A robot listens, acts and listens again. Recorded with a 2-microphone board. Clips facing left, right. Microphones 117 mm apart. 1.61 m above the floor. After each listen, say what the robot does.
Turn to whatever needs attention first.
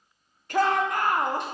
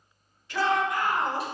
Turn 50° left.
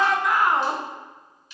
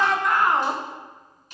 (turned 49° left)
Found it: a shout, straight ahead.